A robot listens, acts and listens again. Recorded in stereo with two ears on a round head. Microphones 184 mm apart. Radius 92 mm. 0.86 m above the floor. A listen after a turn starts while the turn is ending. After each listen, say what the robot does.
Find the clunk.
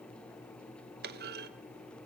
Turn 50° right.
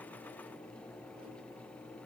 Keep listening.
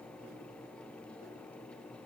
I heard a clunk, but can't make it out now. It was about straight ahead or 80° right.